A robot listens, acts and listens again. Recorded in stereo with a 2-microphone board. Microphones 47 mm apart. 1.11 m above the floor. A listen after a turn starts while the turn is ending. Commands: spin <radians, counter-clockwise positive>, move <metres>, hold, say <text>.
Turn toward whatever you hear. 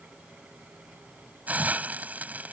spin -0.61
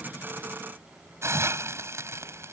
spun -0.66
spin -1.83
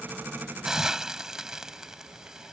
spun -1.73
spin -0.17
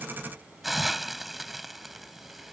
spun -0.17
say Facing the hiss.